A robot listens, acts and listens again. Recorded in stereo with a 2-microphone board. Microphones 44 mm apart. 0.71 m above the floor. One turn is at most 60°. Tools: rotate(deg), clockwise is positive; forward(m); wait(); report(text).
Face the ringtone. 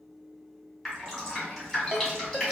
rotate(20)
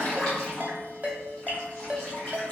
rotate(60)
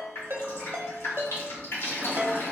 rotate(60)
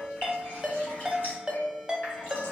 rotate(15)
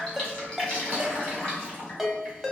report("Facing the ringtone.")